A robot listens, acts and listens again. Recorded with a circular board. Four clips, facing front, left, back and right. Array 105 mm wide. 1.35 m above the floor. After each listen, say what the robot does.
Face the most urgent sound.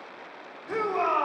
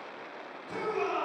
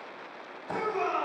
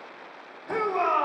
Turn 60° right.
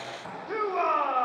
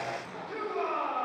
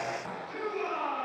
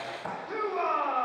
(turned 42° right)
Turn 15° right.
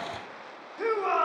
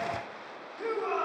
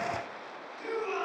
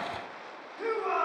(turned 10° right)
Facing the shout.